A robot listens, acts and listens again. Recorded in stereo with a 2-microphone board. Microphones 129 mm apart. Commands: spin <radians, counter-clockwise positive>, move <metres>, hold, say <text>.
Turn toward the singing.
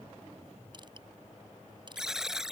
hold
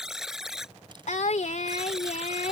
spin 1.13
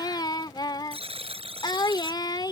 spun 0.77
spin 0.61
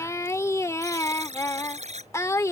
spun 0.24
spin 0.44
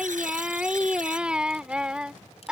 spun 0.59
spin -0.17
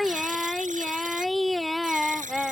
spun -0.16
say Facing the singing.